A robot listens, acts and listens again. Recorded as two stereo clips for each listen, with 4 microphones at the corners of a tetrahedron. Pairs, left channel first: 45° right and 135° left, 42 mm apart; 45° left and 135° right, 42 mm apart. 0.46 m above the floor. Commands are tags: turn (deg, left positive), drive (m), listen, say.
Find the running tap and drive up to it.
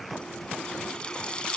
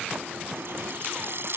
<turn deg="-110"/>
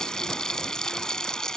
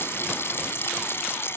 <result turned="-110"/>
<turn deg="30"/>
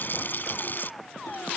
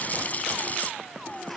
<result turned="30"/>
<drive m="1.0"/>
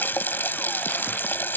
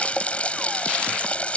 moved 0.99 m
<turn deg="-15"/>
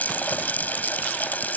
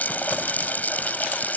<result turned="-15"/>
<drive m="1.0"/>
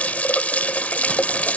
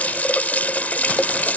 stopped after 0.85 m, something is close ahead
<say>I am next to the running tap.</say>